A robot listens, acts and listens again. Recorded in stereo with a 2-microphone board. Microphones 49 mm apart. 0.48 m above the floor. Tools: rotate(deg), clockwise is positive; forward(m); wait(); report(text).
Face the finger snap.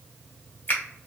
rotate(-40)
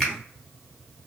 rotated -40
rotate(-10)
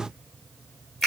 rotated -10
report("Found it: a finger snap, straight ahead.")